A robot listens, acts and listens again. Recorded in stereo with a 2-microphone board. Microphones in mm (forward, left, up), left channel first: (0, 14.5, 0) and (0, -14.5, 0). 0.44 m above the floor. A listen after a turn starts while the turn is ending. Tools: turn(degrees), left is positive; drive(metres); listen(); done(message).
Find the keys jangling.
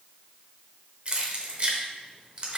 turn(degrees=-40)
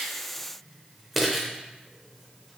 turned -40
done("Found it: keys jangling, straight ahead, under 1 m away.")